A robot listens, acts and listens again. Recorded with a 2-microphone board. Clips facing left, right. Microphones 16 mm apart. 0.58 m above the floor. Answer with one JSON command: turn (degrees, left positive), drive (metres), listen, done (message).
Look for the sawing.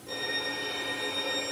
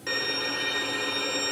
{"listen": true}
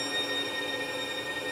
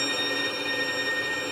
{"listen": true}
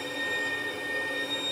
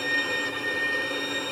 {"done": "I can't make out sawing to turn to."}